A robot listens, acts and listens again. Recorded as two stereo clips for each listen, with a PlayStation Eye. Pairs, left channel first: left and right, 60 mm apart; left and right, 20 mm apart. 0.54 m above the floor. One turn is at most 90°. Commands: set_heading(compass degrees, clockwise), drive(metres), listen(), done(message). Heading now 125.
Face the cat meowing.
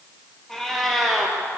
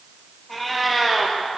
set_heading(95)
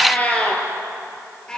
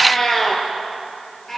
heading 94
set_heading(64)
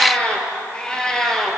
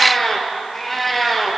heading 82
set_heading(52)
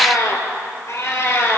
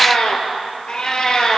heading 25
set_heading(295)
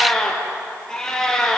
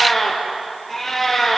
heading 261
set_heading(251)
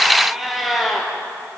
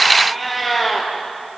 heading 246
done("Found it: a cat meowing, straight ahead, 2 to 4 m away.")